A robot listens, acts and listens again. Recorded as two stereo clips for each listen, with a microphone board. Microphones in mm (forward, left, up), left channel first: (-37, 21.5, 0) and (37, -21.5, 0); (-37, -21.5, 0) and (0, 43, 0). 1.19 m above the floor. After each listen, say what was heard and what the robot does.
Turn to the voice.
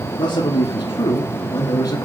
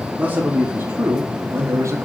The man speaking: 110° left. Turn 110° left.
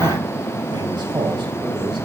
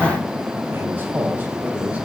Keep listening.
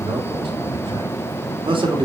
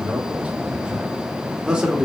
The man speaking is now 20° right. Turn 20° right.
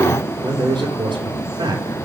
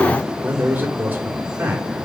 Facing the man speaking.